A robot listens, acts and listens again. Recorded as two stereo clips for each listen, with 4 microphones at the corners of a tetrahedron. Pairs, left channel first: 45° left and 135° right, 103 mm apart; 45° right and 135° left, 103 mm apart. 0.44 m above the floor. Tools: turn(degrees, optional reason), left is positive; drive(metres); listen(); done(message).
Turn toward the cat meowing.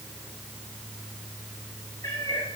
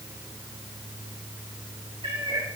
turn(degrees=100, reason="The cat meowing: 100° left.")
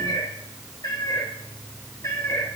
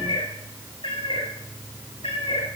turn(degrees=-15, reason="The cat meowing is now 15° right.")
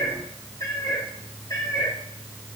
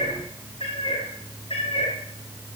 turn(degrees=-15, reason="The cat meowing is now 15° right.")
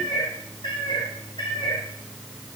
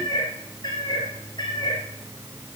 done("Found it: a cat meowing, straight ahead.")